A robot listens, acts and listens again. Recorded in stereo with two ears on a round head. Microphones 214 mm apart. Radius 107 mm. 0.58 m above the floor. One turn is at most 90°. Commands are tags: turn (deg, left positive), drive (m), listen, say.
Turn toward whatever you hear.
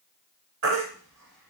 <turn deg="-50"/>
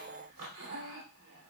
<listen/>
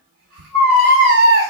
<turn deg="-70"/>
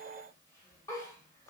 <listen/>
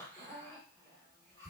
<listen/>
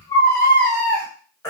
<turn deg="15"/>
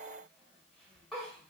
<listen/>
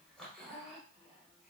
<listen/>
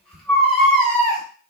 <say>Found it: a baby crying, straight ahead.</say>